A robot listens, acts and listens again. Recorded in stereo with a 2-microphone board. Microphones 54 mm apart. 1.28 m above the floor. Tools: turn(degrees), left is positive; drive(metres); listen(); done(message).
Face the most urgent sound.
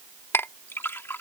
listen()
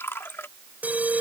turn(degrees=-35)
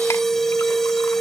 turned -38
done("Found it: an alarm, straight ahead.")